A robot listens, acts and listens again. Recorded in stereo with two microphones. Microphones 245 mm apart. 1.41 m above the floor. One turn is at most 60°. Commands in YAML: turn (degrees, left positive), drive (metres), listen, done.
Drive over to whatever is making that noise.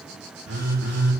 turn: -60
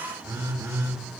turn: -15
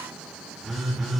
drive: 1.0
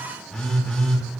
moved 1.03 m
drive: 1.0
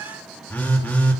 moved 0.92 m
drive: 1.0
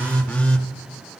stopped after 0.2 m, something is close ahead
done: "Arrived at the phone buzzing, straight ahead."